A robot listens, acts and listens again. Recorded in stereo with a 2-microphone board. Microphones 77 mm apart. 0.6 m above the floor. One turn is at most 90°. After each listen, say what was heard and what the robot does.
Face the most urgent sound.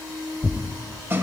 Keep listening.
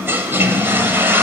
Keep listening.
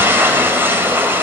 I can't make out anything urgent, only a toilet flushing and tearing paper.